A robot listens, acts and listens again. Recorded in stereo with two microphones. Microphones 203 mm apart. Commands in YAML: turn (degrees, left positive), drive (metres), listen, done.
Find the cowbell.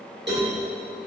turn: -60
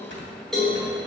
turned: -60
done: "Facing the cowbell, 1 to 2 m away."